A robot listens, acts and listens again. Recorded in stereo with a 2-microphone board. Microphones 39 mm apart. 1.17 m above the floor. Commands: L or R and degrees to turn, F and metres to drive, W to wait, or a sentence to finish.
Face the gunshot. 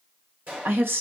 R40
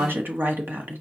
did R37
W
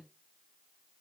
I heard a gunshot, but can't make it out now. It was about straight ahead or 105° right.